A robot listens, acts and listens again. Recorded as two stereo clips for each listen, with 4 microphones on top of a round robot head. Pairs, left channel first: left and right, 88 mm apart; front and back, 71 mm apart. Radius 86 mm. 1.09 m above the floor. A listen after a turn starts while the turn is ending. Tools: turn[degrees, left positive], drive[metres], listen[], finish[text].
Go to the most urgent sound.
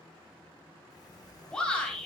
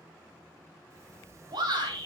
Thought: The shout: 170° left.
Action: turn[170]
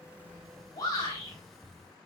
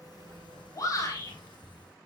Thought: The shout is now 35° left.
Action: turn[35]
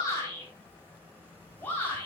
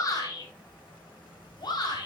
Thought: The shout is now 15° left.
Action: turn[15]
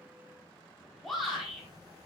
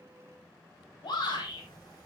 Action: drive[1.0]
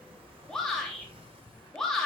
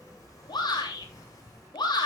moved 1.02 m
Action: drive[1.0]
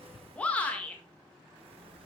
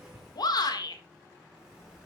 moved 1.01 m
Thought: The shout is now 15° left.
Action: turn[15]
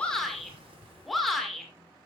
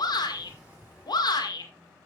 Action: drive[1.0]
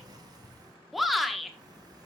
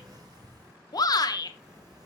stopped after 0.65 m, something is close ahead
Action: finish[Arrived at the shout, straight ahead.]